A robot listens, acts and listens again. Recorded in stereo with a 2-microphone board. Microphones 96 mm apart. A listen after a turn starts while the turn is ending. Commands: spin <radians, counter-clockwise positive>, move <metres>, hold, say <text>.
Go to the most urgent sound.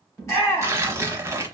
spin 0.52
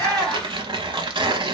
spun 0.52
move 1.0
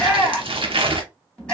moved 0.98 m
spin 0.17
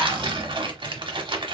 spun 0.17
hold
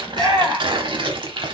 move 1.0
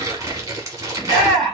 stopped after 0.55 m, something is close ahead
say Arrived at the shout, straight ahead.